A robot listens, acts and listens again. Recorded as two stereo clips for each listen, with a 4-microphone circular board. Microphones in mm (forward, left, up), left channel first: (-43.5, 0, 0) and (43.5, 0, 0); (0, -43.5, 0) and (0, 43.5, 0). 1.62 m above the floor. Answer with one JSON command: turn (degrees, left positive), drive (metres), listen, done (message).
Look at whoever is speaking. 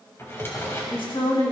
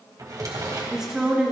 {"turn": 170}
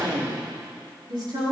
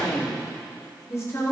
{"turn": -35}
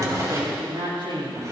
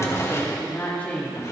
{"turn": -15}
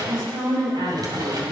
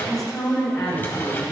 {"done": "Found it: a woman speaking, straight ahead."}